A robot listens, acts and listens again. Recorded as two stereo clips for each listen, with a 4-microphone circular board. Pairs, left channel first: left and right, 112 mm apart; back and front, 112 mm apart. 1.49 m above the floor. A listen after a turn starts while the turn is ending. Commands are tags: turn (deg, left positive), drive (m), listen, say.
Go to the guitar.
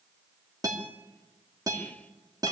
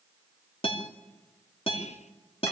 <turn deg="-145"/>
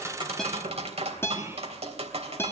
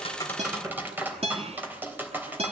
<turn deg="25"/>
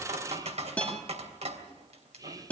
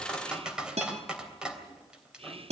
<turn deg="15"/>
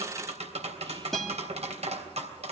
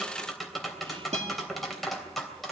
<drive m="1.0"/>
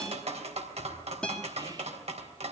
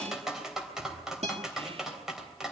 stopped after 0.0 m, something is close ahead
<turn deg="10"/>
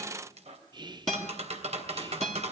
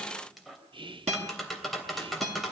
<say>Blocked. The guitar is further on, straight ahead.</say>